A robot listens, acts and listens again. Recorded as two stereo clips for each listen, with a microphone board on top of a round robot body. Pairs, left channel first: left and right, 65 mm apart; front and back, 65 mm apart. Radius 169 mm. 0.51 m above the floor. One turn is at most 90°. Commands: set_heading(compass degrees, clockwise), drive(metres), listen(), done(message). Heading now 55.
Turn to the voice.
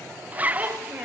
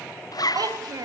set_heading(145)
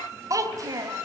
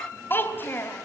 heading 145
set_heading(200)
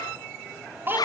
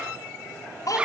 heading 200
set_heading(230)
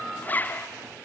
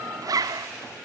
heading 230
listen()
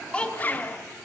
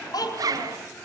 set_heading(215)
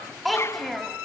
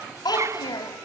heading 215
done("Found it: a child speaking, straight ahead, 2 to 4 m away.")